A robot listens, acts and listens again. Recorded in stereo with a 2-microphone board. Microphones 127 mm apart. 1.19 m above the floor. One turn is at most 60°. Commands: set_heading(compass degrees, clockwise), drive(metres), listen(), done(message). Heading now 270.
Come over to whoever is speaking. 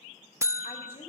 set_heading(220)
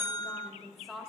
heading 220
drive(1.0)
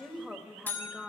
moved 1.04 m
drive(1.0)
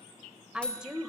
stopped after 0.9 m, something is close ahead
done("I am next to the woman speaking.")